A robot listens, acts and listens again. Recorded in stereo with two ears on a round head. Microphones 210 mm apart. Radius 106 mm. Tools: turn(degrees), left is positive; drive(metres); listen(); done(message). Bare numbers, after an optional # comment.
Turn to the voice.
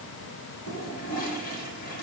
listen()
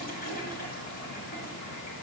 listen()
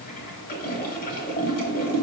done("I can't make out anyone speaking to turn to.")